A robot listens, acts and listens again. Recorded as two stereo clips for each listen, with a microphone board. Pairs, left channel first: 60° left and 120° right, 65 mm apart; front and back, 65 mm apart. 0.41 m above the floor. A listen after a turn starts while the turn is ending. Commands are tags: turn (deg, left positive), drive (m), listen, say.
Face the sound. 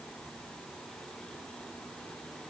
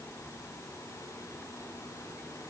<listen/>
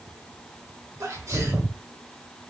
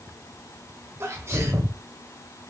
<turn deg="-150"/>
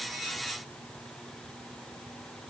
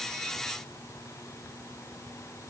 <say>Facing where the sneeze came from. I can't hear it now.</say>